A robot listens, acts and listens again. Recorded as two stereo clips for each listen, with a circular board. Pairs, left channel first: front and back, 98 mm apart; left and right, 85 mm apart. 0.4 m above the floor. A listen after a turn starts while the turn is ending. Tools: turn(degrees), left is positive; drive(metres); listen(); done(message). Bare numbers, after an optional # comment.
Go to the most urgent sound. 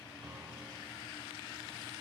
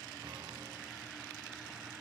listen()
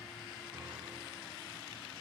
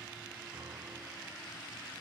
listen()
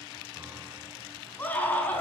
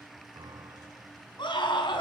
# The scream: 75° left.
turn(75)
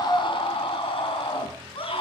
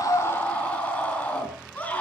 # The scream is now 20° left.
turn(20)
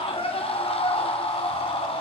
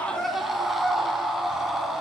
drive(1.0)
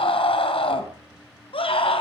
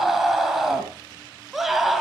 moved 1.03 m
drive(1.0)
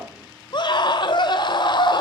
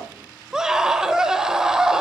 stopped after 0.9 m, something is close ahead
# The scream is now 10° right.
turn(-10)
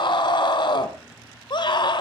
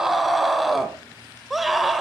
done("Arrived at the scream, straight ahead.")